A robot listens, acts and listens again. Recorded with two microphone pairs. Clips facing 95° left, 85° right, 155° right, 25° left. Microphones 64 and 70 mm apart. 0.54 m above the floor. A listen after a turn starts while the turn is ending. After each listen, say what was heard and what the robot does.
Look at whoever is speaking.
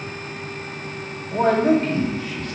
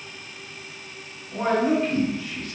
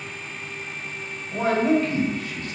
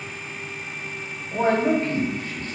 The man speaking: 75° left. Turn 75° left.
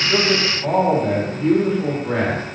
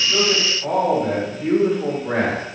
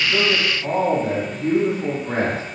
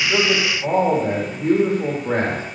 The man speaking is now 10° right. Turn 10° right.
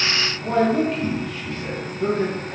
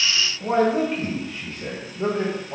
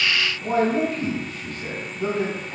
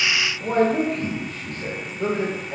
The man speaking is now 30° right. Turn 30° right.
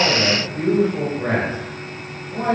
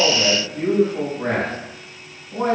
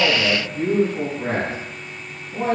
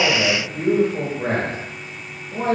The man speaking is now 10° left. Turn 10° left.
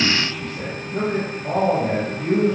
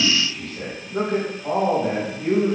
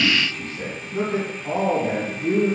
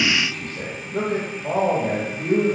Found it: a man speaking, straight ahead, 1 to 2 m away.